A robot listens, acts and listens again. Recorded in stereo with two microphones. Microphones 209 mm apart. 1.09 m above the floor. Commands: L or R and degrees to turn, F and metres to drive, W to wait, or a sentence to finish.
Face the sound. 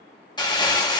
L20
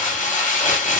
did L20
L140
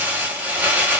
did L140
R10
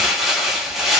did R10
Facing the crumpling.